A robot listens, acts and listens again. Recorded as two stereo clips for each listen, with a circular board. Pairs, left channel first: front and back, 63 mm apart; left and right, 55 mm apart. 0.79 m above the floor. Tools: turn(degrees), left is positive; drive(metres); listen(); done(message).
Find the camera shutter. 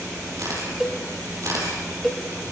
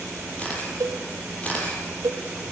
turn(degrees=155)
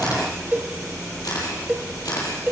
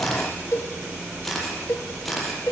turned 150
done("Found it: a camera shutter, straight ahead.")